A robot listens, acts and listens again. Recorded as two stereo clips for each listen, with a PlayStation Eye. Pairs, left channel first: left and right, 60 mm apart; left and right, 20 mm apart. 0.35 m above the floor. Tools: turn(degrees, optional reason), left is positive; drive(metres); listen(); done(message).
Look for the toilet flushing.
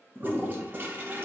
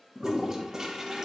turn(degrees=-35, reason="The toilet flushing: about 35° right or 145° right.")
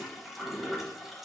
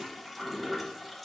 done("Found it: a toilet flushing, straight ahead.")